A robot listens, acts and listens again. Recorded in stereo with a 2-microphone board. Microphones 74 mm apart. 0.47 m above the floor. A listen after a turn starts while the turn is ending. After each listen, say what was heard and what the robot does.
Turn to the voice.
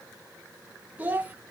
The child speaking: about 20° right or 160° right. Turn 20° right.
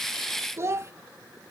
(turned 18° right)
So it is at 145° right. Turn 145° right.
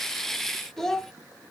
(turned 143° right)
Found it: a child speaking, straight ahead.